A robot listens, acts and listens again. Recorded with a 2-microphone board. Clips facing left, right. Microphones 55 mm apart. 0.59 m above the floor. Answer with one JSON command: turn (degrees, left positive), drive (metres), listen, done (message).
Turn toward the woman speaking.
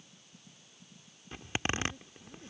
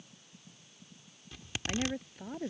{"turn": -60}
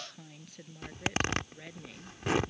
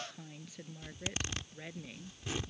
{"done": "Facing the woman speaking."}